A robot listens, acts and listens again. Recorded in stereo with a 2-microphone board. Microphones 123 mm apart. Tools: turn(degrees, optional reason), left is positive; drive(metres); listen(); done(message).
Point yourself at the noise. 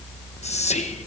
turn(degrees=65, reason="The whispering: about 65° left or 115° left.")
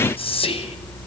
turn(degrees=50, reason="So it is at 50° left.")
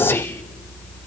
listen()
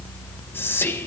turn(degrees=15, reason="The whispering is now 15° left.")
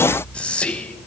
turn(degrees=10, reason="The whispering is now 10° left.")
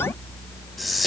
done("Found it: whispering, straight ahead, 1 to 2 m away.")